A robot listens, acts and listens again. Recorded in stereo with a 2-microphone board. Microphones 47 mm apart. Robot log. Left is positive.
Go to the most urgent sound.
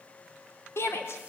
note: The shout: about 60° left or 120° left.
cmd yaw +60
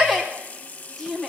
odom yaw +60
cmd fwd 1.0
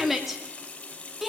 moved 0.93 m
cmd fwd 1.0
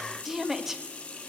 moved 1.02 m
note: The shout is now 10° right.
cmd yaw -10
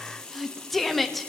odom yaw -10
cmd fwd 1.0
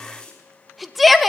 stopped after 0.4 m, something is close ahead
end: Arrived at the shout, straight ahead.